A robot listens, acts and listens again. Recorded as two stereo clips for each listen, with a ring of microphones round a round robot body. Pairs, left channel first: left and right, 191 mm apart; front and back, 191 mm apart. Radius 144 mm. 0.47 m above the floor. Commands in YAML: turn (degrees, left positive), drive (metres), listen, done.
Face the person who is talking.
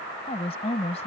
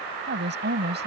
turn: 155
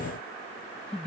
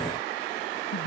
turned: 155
listen: true
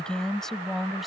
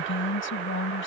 done: "Found it: a woman speaking, straight ahead."